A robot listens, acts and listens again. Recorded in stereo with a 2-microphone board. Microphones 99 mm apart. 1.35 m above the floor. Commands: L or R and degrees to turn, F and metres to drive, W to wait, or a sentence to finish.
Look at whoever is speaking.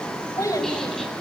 L35
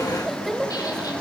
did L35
Found it: a child speaking, straight ahead.